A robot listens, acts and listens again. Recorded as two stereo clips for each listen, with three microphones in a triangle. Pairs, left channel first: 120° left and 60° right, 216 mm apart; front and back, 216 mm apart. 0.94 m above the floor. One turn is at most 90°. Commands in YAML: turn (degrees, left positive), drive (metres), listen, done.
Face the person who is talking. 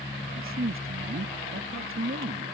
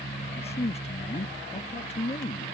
turn: -60
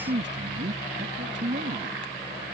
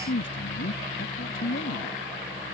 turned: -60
turn: -25
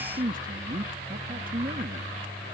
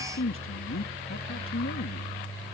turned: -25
turn: -10
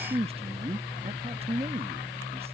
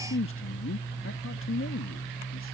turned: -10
done: "Found it: a man speaking, straight ahead."